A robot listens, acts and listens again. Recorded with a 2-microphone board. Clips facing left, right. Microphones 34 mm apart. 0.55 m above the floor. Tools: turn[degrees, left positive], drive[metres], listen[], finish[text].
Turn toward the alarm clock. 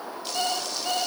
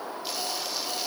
Thought: The alarm clock: about 50° left or 130° left.
Action: turn[50]
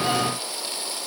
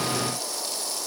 Action: listen[]
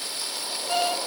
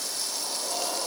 Thought: So it is at 80° left.
Action: turn[80]
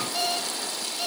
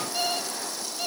Action: finish[Found it: an alarm clock, straight ahead, 2 to 4 m away.]